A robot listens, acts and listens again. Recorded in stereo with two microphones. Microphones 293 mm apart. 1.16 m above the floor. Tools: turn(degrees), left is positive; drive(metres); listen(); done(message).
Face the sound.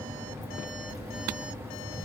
listen()
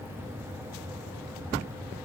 listen()
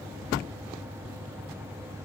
done("I can't make out anything.")